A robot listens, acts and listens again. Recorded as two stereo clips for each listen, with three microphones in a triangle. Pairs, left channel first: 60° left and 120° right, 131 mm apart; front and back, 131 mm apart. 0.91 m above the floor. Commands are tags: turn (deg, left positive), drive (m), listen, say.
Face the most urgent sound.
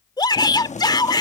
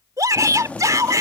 <turn deg="115"/>
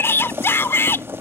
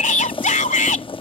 <turn deg="-10"/>
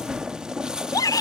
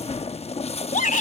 <say>Facing the shout.</say>